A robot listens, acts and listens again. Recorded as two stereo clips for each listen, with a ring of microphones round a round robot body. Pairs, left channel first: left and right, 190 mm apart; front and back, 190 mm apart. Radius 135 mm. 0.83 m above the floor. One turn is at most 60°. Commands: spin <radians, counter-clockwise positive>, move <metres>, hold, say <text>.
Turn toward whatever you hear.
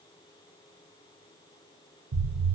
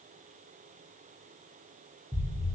spin -1.05
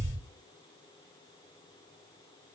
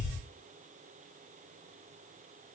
spin -0.52
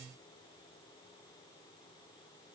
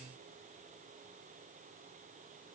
say Facing where the explosion came from. I can't hear it now.